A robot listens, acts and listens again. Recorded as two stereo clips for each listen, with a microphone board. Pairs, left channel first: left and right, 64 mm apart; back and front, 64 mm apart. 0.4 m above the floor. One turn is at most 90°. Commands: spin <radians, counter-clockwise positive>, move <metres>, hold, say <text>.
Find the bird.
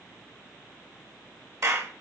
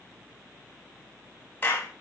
hold
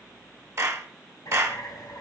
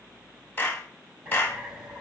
spin 1.13
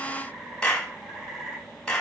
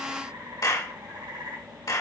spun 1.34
spin -0.17
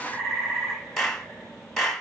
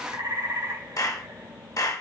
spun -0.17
say Found it: a bird, straight ahead, 2 to 4 m away.